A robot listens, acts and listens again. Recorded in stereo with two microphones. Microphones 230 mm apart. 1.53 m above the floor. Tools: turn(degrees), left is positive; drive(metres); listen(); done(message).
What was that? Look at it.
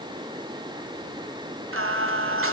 turn(degrees=-75)
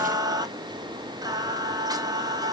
turn(degrees=-20)
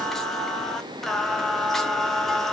done("Found it: singing, straight ahead, under 1 m away.")